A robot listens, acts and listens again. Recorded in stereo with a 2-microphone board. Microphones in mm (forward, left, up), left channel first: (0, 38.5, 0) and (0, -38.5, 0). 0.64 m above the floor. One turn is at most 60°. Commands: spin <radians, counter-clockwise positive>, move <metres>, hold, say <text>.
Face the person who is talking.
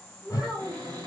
spin -0.52
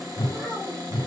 spin 0.35
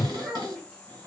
say Found it: a child speaking, straight ahead, 1 to 2 m away.